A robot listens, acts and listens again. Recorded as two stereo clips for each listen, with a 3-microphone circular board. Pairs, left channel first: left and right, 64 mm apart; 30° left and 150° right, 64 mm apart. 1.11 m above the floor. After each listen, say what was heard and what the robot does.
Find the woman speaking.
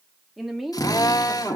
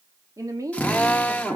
The woman speaking: 175° right. Turn 175° right.
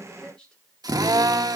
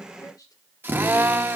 The woman speaking is now 15° left. Turn 15° left.
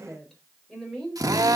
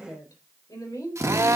The woman speaking is now 10° left. Turn 10° left.
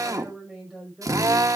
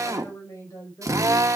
Found it: a woman speaking, straight ahead.